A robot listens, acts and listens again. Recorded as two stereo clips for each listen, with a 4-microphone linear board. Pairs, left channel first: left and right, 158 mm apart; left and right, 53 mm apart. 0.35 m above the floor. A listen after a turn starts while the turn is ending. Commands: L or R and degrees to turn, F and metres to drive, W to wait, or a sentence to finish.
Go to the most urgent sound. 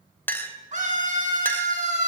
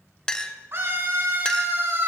R50
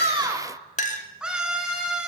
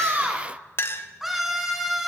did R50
F1.0
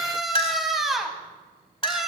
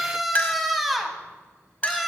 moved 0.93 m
F1.0
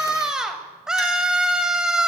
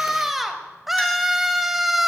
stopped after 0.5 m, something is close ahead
I am next to the scream.